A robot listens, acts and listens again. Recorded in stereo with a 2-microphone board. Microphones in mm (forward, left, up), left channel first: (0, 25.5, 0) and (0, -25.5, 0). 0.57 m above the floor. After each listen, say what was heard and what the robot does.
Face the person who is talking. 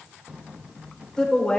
The woman speaking: about 15° left or 165° left. Turn 15° left.
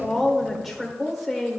Facing the woman speaking.